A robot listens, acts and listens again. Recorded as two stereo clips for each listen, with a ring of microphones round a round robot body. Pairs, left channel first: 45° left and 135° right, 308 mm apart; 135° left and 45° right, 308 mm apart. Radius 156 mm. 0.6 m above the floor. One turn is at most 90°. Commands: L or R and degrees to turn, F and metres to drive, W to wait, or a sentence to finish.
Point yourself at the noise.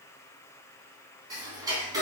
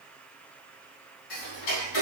L90
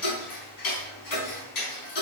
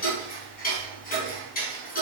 L70
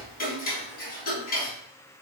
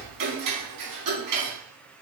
R20
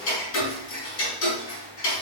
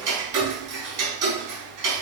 Found it: ticking, straight ahead.